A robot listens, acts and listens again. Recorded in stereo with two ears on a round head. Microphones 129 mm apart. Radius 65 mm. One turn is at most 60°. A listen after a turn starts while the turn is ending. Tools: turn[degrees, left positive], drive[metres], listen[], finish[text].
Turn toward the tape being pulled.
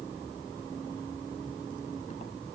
Action: listen[]
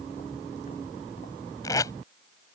Thought: The tape being pulled: about 20° left or 160° left.
Action: turn[20]
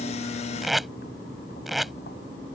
Action: finish[Facing the tape being pulled.]